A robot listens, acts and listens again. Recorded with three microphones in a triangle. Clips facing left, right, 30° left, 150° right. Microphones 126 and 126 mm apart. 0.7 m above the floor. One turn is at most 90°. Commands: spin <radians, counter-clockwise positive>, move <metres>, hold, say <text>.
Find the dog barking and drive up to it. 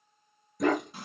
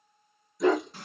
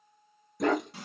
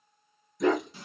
spin 0.96
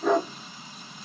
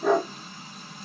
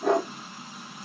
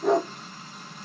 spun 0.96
move 1.0
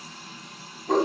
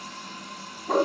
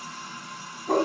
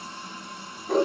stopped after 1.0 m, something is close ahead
say I am next to the dog barking.